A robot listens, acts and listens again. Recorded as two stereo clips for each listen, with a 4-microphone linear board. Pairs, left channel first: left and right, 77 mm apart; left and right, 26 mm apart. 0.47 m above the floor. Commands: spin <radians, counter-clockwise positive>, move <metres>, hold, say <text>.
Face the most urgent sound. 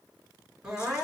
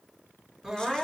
spin -0.52
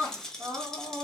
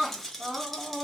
spin -2.36
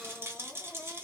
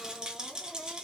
hold
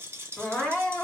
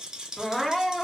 spin 0.35
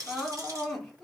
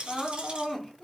say Facing the crying.